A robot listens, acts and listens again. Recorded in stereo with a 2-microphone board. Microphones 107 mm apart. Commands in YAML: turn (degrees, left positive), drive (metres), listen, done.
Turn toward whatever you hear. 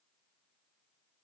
listen: true
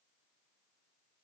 listen: true
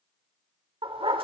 turn: -55
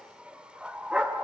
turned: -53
turn: -10
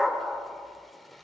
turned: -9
done: "Facing the dog barking, 1 to 2 m away."